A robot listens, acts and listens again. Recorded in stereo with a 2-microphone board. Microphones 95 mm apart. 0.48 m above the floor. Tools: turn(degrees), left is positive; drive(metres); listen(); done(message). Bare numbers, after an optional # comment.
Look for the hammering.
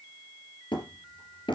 # The hammering: about 55° left or 125° left.
turn(55)
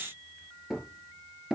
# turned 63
done("Facing the hammering, 2 to 4 m away.")